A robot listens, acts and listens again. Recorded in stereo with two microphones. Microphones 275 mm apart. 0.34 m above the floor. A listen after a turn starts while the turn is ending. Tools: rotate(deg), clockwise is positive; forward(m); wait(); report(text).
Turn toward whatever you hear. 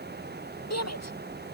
rotate(-65)
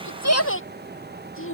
rotate(-50)
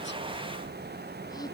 wait()
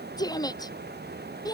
rotate(-15)
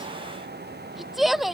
report("Found it: a shout, straight ahead.")